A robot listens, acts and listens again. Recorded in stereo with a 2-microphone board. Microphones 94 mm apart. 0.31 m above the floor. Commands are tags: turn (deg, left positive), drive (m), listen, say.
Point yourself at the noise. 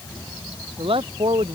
<turn deg="-90"/>
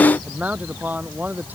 <turn deg="-20"/>
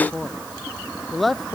<say>Found it: a man speaking, straight ahead.</say>